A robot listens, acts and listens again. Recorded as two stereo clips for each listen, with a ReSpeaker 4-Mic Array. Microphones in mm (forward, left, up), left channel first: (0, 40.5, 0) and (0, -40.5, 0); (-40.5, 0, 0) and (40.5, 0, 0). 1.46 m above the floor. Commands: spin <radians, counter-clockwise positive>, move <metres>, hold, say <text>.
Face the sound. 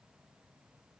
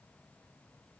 hold
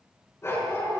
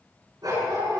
spin 0.61
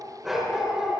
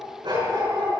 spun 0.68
say Found it: a dog barking, straight ahead.